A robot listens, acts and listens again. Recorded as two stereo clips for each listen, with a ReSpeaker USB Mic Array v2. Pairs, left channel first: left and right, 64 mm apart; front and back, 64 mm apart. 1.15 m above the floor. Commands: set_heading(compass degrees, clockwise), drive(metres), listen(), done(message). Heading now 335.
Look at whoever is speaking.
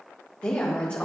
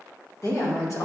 set_heading(315)
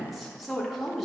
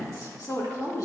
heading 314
done("Facing the woman speaking.")